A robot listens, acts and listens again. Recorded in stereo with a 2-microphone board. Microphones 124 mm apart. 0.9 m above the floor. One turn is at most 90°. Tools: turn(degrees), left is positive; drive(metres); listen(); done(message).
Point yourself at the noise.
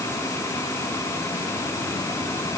listen()
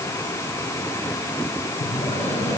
turn(degrees=60)
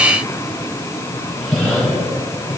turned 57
done("Found it: breathing, straight ahead.")